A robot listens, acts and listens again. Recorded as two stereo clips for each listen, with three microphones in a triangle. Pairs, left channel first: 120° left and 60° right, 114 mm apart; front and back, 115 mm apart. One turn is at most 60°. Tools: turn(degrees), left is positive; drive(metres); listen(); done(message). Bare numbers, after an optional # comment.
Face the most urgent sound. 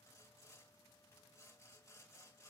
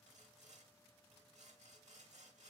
listen()
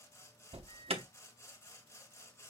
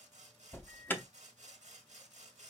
# The alarm: 70° right.
turn(-60)
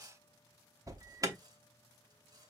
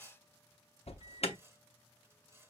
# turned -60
done("Facing the alarm, under 1 m away.")